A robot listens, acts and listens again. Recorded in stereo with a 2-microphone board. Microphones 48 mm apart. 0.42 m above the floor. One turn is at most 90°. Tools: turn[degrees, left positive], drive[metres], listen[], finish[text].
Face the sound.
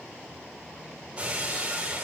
Thought: The breaking glass: about 15° right or 165° right.
Action: turn[-15]
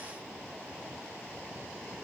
Action: listen[]
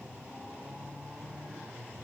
Action: finish[I heard breaking glass, but can't make it out now. It was about straight ahead or 150° right.]